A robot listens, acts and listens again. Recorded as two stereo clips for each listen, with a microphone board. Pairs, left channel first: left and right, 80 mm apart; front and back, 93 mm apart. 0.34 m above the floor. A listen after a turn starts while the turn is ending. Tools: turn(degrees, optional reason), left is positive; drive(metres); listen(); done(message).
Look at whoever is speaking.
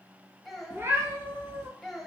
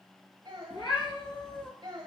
turn(degrees=175, reason="The child speaking: 175° left.")
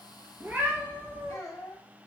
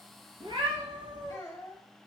turn(degrees=50, reason="The child speaking is now 50° left.")
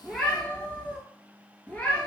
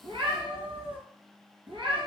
listen()
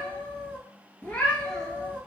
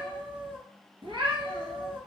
listen()
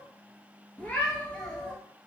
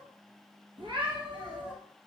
done("I heard a child speaking from this way, but can't make it out now.")